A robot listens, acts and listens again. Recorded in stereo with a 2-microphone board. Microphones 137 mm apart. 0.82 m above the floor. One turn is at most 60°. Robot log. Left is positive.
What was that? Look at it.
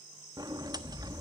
note: The sliding door: about 30° right or 150° right.
cmd yaw -30
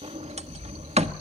note: So it is at 115° right.
cmd yaw -60
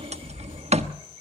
note: The sliding door is now 70° right.
cmd yaw -60
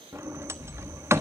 note: The sliding door is now 25° right.
cmd yaw -25
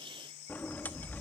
note: The sliding door is now 15° left.
cmd yaw +15
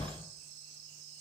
end: Facing the sliding door, 1 to 2 m away.